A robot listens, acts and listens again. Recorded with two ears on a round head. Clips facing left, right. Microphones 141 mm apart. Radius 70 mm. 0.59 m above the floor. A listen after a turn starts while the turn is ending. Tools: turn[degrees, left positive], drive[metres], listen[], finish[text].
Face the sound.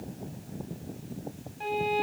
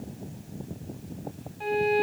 Action: turn[30]
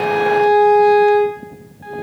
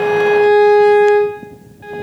Thought: So it is at 25° right.
Action: turn[-25]
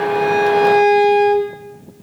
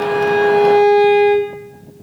Thought: The violin is now 20° left.
Action: turn[20]
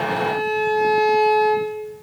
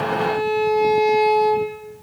Action: finish[Found it: a violin, straight ahead.]